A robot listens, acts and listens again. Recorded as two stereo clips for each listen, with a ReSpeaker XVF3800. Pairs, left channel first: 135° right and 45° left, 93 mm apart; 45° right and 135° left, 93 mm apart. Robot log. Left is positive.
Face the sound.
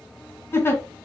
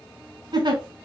note: The giggle: 165° left.
cmd yaw +165
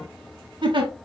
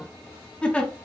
note: The giggle is now 30° left.
cmd yaw +30
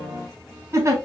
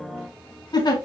note: The giggle is now 10° right.
cmd yaw -10
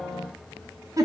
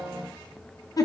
end: Found it: a giggle, straight ahead, 1 to 2 m away.